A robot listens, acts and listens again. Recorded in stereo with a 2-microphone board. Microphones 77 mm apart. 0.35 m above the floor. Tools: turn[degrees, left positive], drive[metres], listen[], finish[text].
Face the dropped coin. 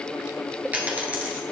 Thought: The dropped coin: about 20° right or 160° right.
Action: turn[-20]
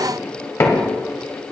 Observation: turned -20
Action: listen[]
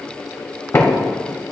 Action: finish[I heard a dropped coin, but can't make it out now. It was about straight ahead or 140° right.]